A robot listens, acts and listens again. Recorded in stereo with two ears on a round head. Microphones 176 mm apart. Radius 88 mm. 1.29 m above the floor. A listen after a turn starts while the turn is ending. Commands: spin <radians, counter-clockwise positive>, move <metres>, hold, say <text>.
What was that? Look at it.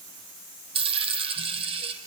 spin -0.52
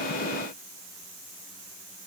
hold
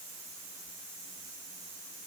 say I heard a dropped coin, but can't make it out now. It was about straight ahead or 120° right.